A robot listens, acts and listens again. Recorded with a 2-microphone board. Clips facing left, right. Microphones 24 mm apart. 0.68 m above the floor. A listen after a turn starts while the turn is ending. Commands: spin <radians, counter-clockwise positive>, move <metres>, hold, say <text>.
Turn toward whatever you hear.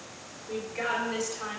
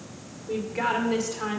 spin -0.79
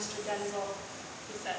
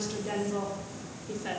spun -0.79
spin -0.35
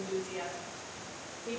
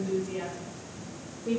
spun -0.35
spin -0.44
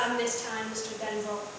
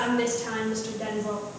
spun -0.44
spin -0.26
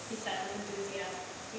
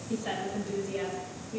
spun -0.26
spin -0.17
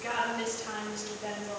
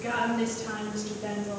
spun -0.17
say Found it: a woman speaking, straight ahead.